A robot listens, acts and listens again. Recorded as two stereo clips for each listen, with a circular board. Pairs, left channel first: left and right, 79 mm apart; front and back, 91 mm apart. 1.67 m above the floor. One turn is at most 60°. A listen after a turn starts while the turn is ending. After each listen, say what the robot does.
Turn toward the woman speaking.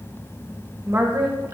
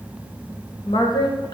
Turn 40° right.
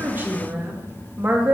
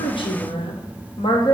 Turn 25° right.
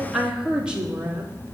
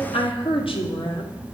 Turn 20° right.
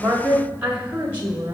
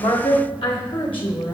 Turn 30° right.
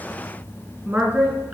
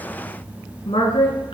Turn 10° right.
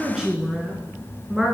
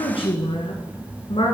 Facing the woman speaking, 1 to 2 m away.